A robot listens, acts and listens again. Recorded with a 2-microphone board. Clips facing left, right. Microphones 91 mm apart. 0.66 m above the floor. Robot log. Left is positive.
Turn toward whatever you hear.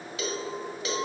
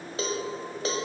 note: The cowbell: about 35° right or 145° right.
cmd yaw -35
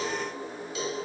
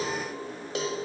note: So it is at 105° right.
cmd yaw -105
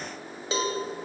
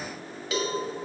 note: The cowbell is now 30° left.
cmd yaw +30
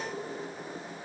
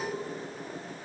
end: Found it: a cowbell, straight ahead, 1 to 2 m away.